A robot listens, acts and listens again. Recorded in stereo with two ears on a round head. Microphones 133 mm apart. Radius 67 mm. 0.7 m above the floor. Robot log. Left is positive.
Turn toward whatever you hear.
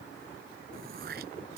note: The throat clearing: about 70° right or 110° right.
cmd yaw -70
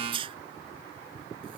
note: So it is at 35° right.
cmd yaw -35
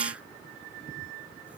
note: The throat clearing is now 10° right.
cmd yaw -10
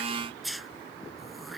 end: Found it: throat clearing, straight ahead.